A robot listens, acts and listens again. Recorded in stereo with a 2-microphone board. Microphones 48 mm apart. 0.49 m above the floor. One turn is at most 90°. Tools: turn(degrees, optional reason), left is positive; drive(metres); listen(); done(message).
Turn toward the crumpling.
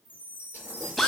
turn(degrees=-90)
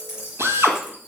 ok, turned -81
turn(degrees=-15, reason="So it is at 15° right.")
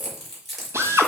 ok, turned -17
done("Found it: crumpling, straight ahead.")